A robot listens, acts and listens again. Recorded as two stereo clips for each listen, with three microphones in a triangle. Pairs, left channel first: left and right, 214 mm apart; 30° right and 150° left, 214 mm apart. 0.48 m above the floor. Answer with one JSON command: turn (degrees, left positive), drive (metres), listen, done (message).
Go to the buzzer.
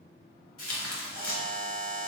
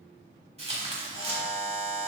{"turn": -20}
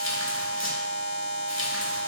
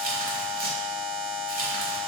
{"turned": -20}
{"drive": 1.0}
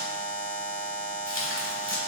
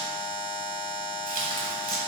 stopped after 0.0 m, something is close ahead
{"turn": -10}
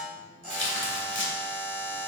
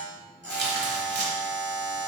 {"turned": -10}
{"done": "Blocked. The buzzer is further on, straight ahead."}